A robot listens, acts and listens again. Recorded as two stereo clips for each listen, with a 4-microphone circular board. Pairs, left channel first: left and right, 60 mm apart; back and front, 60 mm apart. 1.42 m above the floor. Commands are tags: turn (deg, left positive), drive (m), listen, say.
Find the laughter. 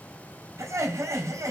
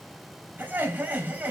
<turn deg="-60"/>
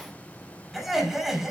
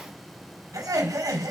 <say>Found it: laughter, straight ahead, over 4 m away.</say>